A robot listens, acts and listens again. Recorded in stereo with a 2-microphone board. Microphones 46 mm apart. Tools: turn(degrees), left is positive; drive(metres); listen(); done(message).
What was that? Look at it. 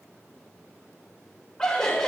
turn(degrees=30)
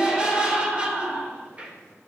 turn(degrees=-30)
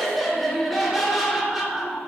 turn(degrees=-10)
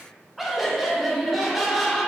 done("Found it: laughter, straight ahead.")